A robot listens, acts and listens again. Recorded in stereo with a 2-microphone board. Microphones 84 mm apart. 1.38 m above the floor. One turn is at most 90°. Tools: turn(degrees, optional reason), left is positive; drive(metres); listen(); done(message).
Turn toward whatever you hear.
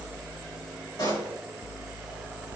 turn(degrees=55, reason="The pop: about 55° left or 125° left.")
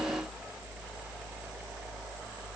listen()
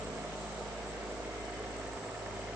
done("I heard a pop, but can't make it out now. It was about straight ahead or 70° left.")